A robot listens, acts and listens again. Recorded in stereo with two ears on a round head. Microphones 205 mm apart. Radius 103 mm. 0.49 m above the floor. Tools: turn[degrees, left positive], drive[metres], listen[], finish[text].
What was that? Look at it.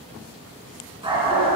Thought: The dog barking: about 30° right or 150° right.
Action: turn[-30]
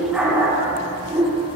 Thought: The dog barking: about 25° right or 155° right.
Action: turn[-25]
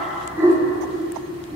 Thought: The dog barking: about 20° right or 160° right.
Action: turn[-20]
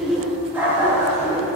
Action: turn[-30]
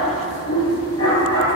Thought: So it is at 20° left.
Action: turn[20]
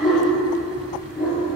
Action: finish[Facing the dog barking, 2 to 4 m away.]